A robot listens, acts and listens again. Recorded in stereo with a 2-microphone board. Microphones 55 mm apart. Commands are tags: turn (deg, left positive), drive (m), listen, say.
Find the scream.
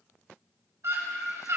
<turn deg="-65"/>
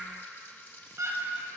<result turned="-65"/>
<turn deg="-50"/>
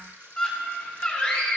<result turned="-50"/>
<turn deg="25"/>
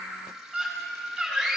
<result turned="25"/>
<say>Found it: a scream, straight ahead, over 4 m away.</say>